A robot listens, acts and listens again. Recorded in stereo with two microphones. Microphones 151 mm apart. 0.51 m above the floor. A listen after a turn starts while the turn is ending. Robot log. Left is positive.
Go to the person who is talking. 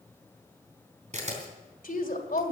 note: The woman speaking: about 65° left or 115° left.
cmd yaw +65
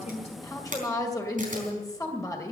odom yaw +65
note: So it is at 25° left.
cmd yaw +25
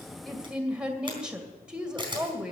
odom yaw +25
cmd fwd 1.0
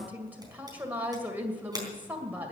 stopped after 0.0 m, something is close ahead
note: The woman speaking is now 10° right.
cmd yaw -10
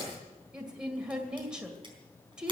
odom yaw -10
end: Something is in my way. I am facing the woman speaking but have not reached it.